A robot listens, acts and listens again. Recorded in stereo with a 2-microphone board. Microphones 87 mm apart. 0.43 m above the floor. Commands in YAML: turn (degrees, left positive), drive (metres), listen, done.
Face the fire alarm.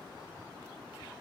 listen: true
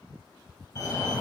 turn: 35
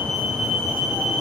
done: "Facing the fire alarm."